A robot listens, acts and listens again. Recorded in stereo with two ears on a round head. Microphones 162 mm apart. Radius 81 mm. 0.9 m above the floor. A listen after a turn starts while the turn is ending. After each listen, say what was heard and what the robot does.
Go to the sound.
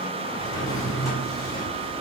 The drawer: about 20° left or 160° left. Turn 20° left.
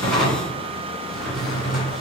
Drive 1.0 m forward.
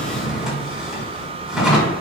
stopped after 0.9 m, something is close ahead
Arrived at the drawer, straight ahead.